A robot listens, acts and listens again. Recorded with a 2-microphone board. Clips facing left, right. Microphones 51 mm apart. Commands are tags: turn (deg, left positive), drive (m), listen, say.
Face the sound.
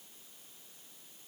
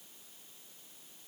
<listen/>
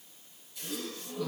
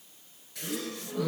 <turn deg="-60"/>
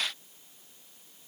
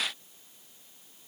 <listen/>
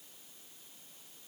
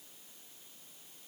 <say>I heard a gasp, but can't make it out now. It was about straight ahead or 60° right.</say>